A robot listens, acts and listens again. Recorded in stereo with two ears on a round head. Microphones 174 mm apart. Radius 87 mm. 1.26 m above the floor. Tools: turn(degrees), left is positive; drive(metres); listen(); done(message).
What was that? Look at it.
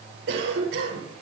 turn(degrees=-65)
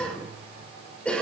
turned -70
done("Found it: a cough, straight ahead.")